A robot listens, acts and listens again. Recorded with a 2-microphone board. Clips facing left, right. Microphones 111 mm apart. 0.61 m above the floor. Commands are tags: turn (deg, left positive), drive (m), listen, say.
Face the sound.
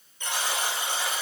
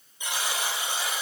<turn deg="-30"/>
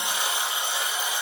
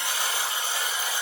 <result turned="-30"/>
<turn deg="20"/>
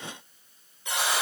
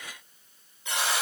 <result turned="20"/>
<say>Found it: a buzzer, straight ahead, 2 to 4 m away.</say>